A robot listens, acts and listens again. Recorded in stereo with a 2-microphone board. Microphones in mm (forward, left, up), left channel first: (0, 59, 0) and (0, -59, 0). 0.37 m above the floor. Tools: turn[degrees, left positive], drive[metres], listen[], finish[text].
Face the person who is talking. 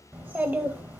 Thought: The child speaking: about 15° right or 165° right.
Action: turn[-15]
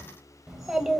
Action: finish[Found it: a child speaking, straight ahead.]